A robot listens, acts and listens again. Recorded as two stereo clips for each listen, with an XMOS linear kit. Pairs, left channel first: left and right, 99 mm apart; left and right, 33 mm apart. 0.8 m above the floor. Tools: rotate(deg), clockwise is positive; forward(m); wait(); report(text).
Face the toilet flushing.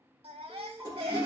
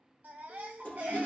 rotate(-45)
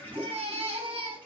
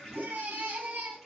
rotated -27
rotate(-15)
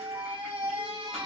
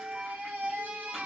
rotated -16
wait()
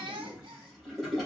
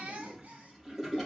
report("Facing the toilet flushing, 2 to 4 m away.")